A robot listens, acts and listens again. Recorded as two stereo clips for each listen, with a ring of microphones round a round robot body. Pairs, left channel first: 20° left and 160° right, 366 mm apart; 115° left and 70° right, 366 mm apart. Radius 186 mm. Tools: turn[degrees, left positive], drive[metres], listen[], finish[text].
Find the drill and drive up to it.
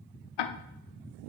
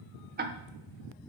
Action: listen[]
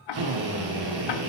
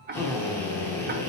Thought: The drill: 165° right.
Action: turn[-165]
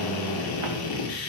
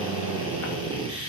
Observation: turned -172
Thought: The drill is now 10° left.
Action: turn[10]
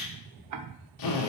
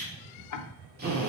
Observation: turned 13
Action: drive[1.0]
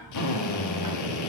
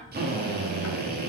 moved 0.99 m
Action: drive[1.0]
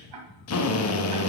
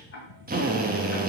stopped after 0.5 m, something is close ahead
Thought: The drill is now 10° right.
Action: turn[-10]
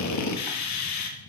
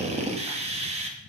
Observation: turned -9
Action: finish[I am next to the drill.]